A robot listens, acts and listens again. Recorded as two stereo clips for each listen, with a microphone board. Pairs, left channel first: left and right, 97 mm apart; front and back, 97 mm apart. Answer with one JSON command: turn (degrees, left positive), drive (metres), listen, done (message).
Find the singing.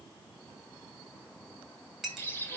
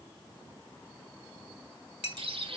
{"listen": true}
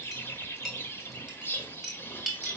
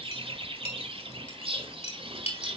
{"listen": true}
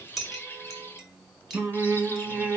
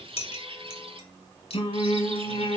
{"turn": -10}
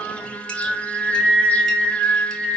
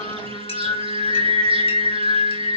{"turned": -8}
{"done": "Found it: singing, straight ahead."}